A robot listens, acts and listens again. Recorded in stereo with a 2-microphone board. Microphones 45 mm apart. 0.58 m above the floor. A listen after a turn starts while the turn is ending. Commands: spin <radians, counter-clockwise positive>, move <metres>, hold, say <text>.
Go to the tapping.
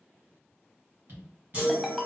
spin -0.96
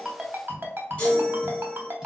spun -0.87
hold
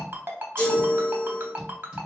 hold
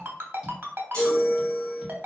say I heard tapping, but can't make it out now. It was about 5° right or 75° right. I did not reach it.